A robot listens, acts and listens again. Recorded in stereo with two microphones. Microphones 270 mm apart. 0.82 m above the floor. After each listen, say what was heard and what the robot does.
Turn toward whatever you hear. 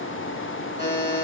The buzzer: about 25° left or 155° left. Turn 25° left.
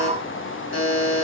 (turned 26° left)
So it is at 130° left. Turn 130° left.
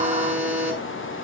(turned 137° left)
Found it: a buzzer, straight ahead.